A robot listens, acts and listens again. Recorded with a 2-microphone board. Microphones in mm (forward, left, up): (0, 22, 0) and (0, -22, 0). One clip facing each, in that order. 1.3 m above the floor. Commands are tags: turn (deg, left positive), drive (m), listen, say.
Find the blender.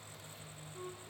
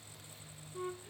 <listen/>
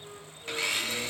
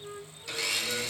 <turn deg="30"/>
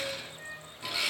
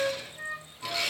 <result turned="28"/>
<say>Found it: a blender, straight ahead.</say>